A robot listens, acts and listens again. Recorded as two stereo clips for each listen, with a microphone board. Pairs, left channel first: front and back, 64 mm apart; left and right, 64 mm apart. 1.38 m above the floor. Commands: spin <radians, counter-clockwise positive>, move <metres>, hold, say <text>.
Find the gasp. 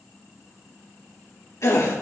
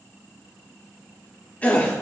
spin 0.44
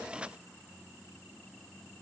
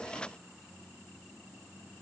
say Facing where the gasp came from. I can't hear it now.